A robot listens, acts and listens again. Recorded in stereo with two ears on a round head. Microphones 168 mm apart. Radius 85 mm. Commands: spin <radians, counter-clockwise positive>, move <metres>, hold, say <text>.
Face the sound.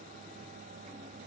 hold
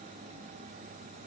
hold
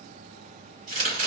spin -0.70
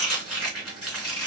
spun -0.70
say Found it: chopping, straight ahead.